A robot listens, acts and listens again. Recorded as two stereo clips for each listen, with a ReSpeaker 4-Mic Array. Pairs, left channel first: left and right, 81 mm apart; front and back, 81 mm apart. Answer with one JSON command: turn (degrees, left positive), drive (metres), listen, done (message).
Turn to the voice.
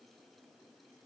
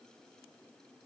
{"listen": true}
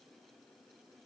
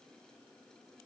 {"listen": true}
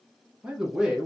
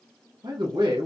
{"turn": -170}
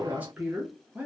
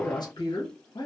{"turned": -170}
{"turn": -20}
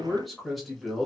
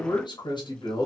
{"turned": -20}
{"done": "Facing the man speaking."}